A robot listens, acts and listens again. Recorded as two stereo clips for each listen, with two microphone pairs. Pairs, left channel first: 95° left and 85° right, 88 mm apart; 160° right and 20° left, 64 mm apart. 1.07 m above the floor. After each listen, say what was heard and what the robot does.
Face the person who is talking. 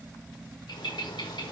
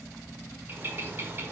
Keep listening.
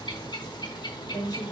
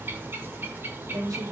The woman speaking: 50° left. Turn 50° left.
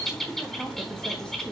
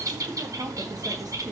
Keep listening.
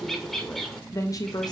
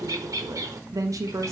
The woman speaking is now 55° left. Turn 55° left.
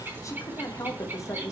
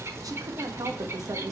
The woman speaking is now 40° left. Turn 40° left.
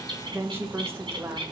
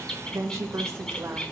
The woman speaking is now 25° right. Turn 25° right.
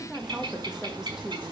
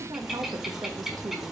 Facing the woman speaking.